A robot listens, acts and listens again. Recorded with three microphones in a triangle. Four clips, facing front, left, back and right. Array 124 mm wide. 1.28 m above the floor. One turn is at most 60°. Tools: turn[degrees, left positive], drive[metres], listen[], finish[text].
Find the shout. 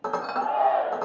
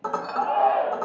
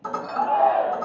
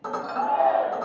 Thought: The shout: 175° left.
Action: turn[60]
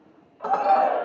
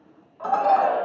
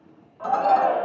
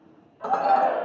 Thought: The shout is now 130° left.
Action: turn[60]
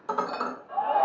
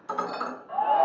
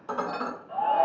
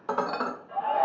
Thought: The shout is now 85° left.
Action: turn[60]
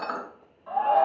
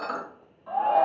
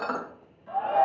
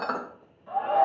Thought: The shout is now 35° left.
Action: turn[35]
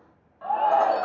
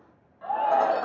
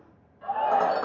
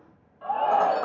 Thought: The shout is now 10° right.
Action: turn[-10]
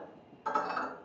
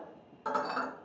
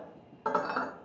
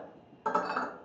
Action: listen[]
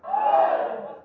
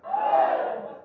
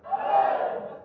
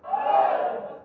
Action: finish[Facing the shout.]